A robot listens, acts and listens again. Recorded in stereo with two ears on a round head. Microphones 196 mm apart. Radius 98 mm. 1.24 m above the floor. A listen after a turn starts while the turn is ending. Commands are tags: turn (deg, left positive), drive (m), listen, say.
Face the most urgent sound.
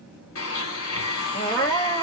<turn deg="30"/>
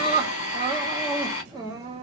<turn deg="-20"/>
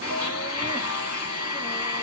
<listen/>
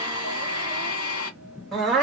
<say>Facing the crying, under 1 m away.</say>